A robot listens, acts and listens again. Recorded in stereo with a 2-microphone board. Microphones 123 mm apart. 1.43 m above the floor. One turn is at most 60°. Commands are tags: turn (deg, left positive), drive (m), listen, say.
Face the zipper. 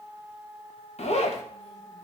<turn deg="60"/>
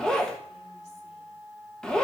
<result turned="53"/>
<say>Found it: a zipper, straight ahead.</say>